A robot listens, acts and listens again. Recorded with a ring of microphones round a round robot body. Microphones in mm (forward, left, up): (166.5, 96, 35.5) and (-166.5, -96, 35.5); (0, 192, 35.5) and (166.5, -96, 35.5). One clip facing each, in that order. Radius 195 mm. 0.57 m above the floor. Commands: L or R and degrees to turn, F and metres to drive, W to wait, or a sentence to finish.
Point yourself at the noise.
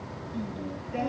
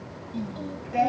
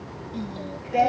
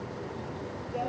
L135
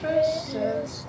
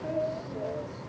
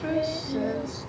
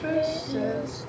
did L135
L35
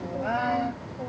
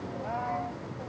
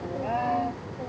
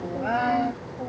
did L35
Found it: singing, straight ahead.